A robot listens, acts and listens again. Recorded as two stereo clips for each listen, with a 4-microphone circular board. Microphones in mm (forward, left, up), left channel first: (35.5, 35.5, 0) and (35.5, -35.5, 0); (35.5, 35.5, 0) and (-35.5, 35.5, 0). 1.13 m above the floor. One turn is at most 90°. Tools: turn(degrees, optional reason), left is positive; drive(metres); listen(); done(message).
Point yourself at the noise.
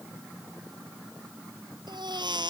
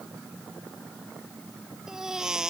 turn(degrees=-90, reason="The baby crying: 100° right.")
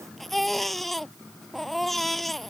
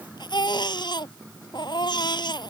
done("Found it: a baby crying, straight ahead.")